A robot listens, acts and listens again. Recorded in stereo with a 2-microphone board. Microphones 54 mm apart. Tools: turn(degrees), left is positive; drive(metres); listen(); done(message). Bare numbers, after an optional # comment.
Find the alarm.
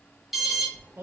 turn(30)
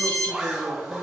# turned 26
# So it is at 155° left.
turn(155)
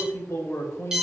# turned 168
# The alarm is now 10° right.
turn(-10)
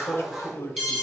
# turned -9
done("Facing the alarm, 2 to 4 m away.")